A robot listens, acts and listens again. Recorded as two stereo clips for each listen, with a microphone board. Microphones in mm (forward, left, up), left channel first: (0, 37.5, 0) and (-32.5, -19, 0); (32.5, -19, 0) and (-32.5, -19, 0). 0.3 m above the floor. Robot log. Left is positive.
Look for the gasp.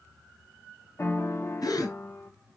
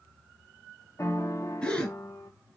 note: The gasp: 70° left.
cmd yaw +70
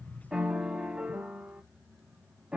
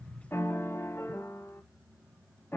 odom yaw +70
end: I heard a gasp from this way, but can't make it out now.